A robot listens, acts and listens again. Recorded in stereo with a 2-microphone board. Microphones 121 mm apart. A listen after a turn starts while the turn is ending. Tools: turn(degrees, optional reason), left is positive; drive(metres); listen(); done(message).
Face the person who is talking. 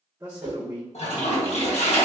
turn(degrees=-20, reason="The man speaking: about 20° right or 160° right.")
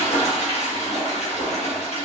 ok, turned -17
listen()
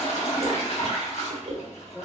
done("Found it: a man speaking, straight ahead.")